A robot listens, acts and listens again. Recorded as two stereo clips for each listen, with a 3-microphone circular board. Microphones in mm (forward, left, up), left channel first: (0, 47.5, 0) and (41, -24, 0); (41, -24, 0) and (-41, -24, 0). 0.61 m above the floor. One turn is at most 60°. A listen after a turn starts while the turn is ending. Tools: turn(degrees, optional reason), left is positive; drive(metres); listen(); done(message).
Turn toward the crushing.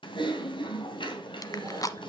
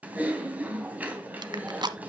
turn(degrees=60, reason="The crushing: 160° left.")
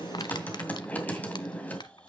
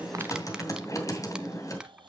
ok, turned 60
turn(degrees=60, reason="The crushing is now 100° left.")
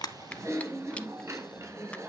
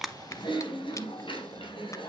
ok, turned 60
turn(degrees=40, reason="Nothing new. It was at 40° left.")
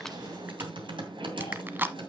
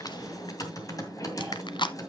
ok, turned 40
done("Facing the crushing.")